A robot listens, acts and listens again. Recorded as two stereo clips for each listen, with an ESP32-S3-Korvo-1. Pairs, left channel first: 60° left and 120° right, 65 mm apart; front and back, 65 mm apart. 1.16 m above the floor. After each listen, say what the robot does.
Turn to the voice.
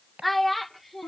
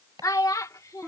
Turn 30° right.
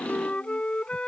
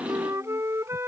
Keep listening.
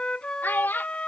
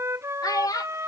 Found it: a child speaking, straight ahead.